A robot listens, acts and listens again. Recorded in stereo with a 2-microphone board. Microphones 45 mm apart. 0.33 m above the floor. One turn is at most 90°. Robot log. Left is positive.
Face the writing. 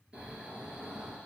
cmd idle
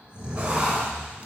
note: The writing: about 25° right or 155° right.
cmd yaw -25
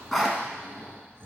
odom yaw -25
end: Found it: writing, straight ahead.